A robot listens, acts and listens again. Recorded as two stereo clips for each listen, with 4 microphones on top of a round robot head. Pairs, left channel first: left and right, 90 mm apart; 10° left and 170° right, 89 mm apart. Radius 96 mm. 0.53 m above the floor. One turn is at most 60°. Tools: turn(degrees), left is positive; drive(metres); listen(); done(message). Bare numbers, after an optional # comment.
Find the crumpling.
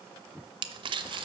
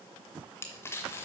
# The crumpling: 60° right.
turn(-60)
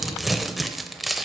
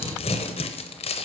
done("Facing the crumpling, under 1 m away.")